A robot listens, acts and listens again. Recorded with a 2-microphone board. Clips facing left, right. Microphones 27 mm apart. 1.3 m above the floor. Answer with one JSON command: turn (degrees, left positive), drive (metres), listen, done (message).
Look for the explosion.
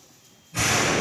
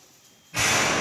{"turn": -45}
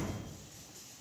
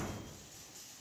{"listen": true}
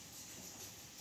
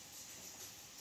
{"done": "I heard an explosion, but can't make it out now. It was about straight ahead or 90° right."}